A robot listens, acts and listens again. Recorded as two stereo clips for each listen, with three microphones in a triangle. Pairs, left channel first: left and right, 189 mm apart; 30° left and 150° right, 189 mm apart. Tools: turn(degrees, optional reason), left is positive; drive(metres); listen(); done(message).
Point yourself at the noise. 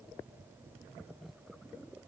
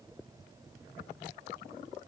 listen()
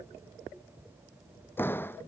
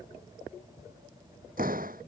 turn(degrees=170, reason="The door slam: 170° left.")
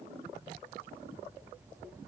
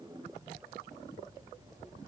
done("I heard a door slam from this way, but can't make it out now.")